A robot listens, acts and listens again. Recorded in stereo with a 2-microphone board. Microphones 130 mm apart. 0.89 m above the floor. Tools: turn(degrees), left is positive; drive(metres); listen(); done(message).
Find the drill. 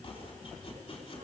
listen()
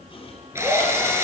turn(degrees=-20)
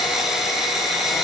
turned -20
done("Facing the drill, over 4 m away.")